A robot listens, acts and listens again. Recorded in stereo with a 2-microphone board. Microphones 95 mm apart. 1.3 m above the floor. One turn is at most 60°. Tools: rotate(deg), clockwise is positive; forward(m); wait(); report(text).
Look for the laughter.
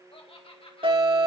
rotate(-60)
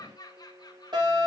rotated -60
rotate(-45)
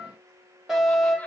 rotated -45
wait()
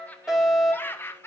rotate(-25)
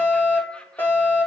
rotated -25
wait()
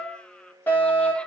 wait()
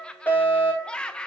rotate(-10)
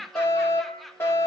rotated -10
report("Facing the laughter.")